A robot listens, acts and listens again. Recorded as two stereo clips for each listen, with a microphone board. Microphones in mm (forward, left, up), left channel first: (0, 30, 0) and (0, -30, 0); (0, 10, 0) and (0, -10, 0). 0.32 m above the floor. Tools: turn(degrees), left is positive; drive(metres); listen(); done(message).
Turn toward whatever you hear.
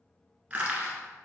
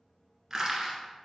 turn(degrees=-25)
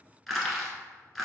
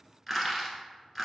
done("Facing the crushing.")